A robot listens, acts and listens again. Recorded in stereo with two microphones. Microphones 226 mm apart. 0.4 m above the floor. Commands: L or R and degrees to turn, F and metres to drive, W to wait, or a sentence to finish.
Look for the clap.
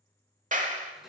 R35
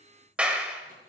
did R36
Facing the clap, 1 to 2 m away.